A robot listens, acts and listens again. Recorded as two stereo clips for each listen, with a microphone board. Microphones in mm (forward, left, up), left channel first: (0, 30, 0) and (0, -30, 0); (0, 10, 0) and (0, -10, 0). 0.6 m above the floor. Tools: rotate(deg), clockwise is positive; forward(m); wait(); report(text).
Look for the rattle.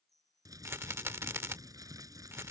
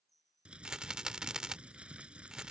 rotate(45)
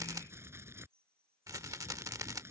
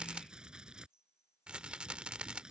rotate(85)
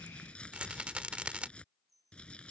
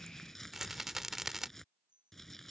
rotate(20)
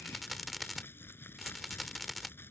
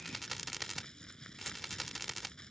report("Facing the rattle.")